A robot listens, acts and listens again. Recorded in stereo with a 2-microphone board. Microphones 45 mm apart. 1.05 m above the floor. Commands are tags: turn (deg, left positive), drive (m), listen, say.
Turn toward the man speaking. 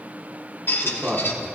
<turn deg="-35"/>
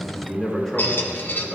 <turn deg="15"/>
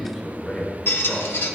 <say>Facing the man speaking, 2 to 4 m away.</say>